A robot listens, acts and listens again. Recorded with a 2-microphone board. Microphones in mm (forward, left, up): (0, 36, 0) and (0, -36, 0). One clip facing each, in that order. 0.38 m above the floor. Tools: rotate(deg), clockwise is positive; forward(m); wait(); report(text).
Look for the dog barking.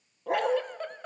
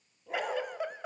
rotate(-65)
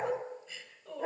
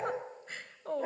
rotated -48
report("Found it: a dog barking, straight ahead.")